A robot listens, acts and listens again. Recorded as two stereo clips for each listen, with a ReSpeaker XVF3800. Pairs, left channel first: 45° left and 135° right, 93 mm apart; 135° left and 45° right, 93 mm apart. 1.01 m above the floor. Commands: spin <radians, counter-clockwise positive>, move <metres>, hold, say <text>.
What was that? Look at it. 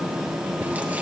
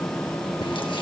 hold
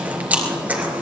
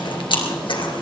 spin 2.71
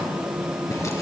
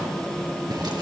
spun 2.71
hold
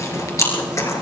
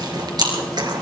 spin -0.17
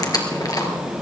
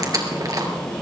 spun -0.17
say Found it: chewing, straight ahead, 2 to 4 m away.